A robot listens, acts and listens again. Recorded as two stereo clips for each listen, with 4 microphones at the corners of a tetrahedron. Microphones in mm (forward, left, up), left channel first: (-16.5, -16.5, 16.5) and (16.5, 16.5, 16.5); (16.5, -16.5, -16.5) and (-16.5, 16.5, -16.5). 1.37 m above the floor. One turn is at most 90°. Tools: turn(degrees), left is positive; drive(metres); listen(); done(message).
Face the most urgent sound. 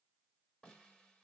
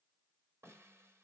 listen()
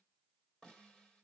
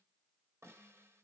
listen()
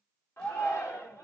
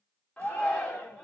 turn(degrees=-90)
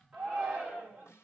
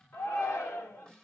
turn(degrees=-25)
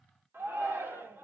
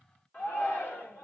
done("Facing the shout.")